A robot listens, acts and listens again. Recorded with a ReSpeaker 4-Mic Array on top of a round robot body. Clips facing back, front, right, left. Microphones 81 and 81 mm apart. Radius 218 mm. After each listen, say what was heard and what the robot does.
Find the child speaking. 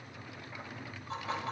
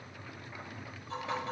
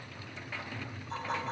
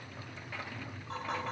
Keep listening.
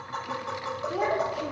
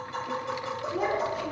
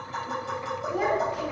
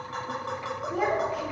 The child speaking: 175° right. Turn 175° right.
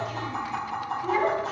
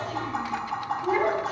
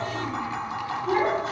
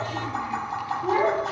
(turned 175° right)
The child speaking is now 75° left. Turn 75° left.
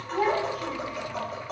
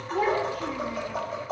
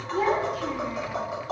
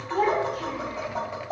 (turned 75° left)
The child speaking is now 35° left. Turn 35° left.
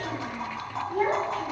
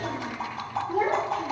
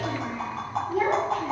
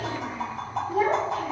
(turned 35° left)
The child speaking is now 10° left. Turn 10° left.
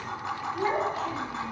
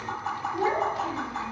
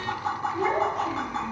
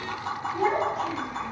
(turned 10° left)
Found it: a child speaking, straight ahead.